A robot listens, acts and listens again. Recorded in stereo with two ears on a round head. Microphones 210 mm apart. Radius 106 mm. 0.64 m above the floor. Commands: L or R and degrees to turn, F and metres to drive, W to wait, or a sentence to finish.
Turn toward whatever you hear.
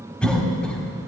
L30
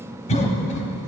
L145
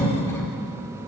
L10
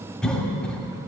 Facing the cough.